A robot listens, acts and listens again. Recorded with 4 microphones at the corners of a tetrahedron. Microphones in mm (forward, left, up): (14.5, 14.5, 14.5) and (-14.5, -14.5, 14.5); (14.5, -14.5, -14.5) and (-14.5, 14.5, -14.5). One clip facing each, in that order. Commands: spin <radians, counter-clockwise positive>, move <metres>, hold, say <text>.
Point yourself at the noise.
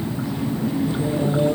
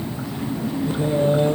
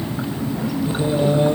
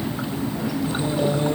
spin -1.66
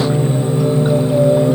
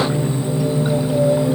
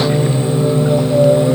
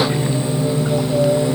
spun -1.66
spin 0.26
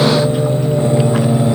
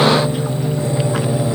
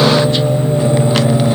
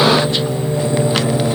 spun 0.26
spin 0.17
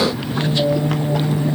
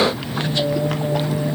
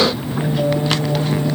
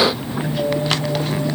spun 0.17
say Facing the singing.